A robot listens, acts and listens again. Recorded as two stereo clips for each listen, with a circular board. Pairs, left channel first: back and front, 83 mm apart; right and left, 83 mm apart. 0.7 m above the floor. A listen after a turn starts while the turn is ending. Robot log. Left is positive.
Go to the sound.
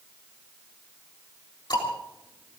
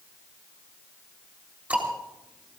note: The ticking: 160° left.
cmd yaw +160
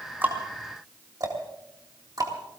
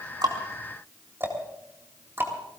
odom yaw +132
note: The ticking is now 30° left.
cmd yaw +30
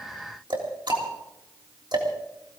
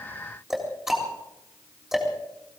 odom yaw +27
cmd fwd 1.0
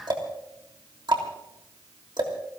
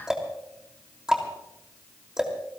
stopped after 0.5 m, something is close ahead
note: The ticking is now 10° left.
cmd yaw +10
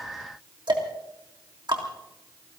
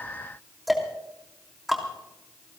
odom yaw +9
end: Something is in my way. I am facing the ticking but have not reached it.